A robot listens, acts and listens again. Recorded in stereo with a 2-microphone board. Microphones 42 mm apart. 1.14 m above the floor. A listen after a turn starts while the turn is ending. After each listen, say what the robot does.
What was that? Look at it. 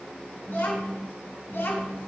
Turn 70° left.
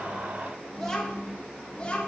Turn 25° left.
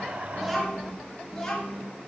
Turn 20° left.
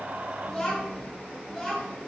Facing the child speaking.